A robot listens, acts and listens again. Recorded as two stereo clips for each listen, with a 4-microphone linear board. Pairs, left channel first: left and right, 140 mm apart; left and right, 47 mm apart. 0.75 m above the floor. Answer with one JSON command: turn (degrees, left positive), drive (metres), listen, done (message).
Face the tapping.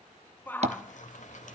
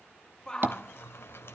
{"turn": -50}
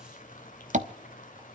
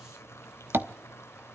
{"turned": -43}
{"turn": -75}
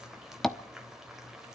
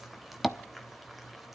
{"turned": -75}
{"done": "Found it: tapping, straight ahead, under 1 m away."}